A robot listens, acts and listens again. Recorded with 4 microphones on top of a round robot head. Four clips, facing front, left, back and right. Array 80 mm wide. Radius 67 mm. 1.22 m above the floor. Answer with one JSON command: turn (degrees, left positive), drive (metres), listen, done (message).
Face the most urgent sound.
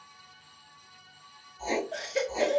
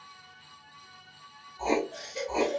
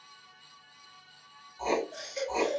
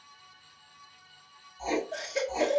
{"turn": -40}
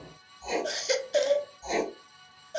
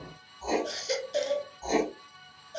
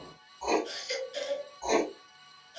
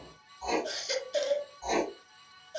{"done": "Found it: a baby crying, straight ahead."}